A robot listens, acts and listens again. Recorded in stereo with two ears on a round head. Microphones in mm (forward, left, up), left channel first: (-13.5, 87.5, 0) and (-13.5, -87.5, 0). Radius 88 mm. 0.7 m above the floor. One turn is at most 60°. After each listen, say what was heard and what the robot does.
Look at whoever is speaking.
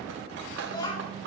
The child speaking: about 25° left or 155° left. Turn 25° left.
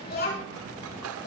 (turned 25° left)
So it is at 125° left. Turn 60° left.
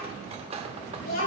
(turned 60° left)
The child speaking is now 45° left. Turn 45° left.
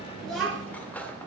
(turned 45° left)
Found it: a child speaking, straight ahead, over 4 m away.